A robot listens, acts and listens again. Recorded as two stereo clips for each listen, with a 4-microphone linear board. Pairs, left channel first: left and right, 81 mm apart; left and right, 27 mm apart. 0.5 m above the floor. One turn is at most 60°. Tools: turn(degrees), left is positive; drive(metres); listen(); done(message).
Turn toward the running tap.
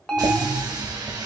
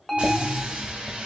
turn(degrees=-55)
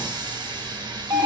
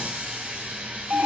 turn(degrees=-60)
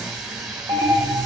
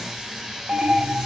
done("Facing the running tap, 1 to 2 m away.")